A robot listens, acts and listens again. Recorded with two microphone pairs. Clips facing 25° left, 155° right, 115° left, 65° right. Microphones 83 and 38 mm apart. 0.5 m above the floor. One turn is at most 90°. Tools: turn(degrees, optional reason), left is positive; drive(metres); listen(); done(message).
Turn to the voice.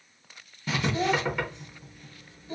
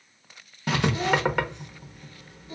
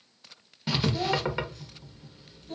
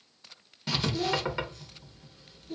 turn(degrees=75, reason="The child speaking: 75° left.")
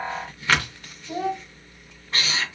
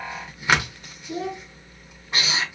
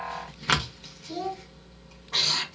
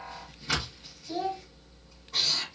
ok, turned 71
done("Found it: a child speaking, straight ahead.")